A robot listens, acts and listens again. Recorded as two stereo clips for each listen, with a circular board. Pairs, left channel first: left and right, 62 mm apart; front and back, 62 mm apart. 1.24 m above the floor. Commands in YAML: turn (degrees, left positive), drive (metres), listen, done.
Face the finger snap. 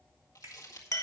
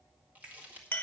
turn: -110
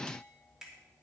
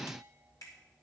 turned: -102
turn: -10
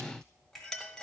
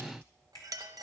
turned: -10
done: "Found it: a finger snap, straight ahead, 2 to 4 m away."